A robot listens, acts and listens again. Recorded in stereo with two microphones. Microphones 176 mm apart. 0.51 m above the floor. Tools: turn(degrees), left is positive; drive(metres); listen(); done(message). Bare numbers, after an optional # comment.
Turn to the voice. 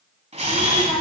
# The child speaking: about 40° left or 140° left.
turn(40)
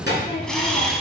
# So it is at 105° left.
turn(105)
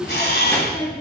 # The child speaking is now 15° left.
turn(15)
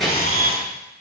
done("Facing the child speaking, over 4 m away.")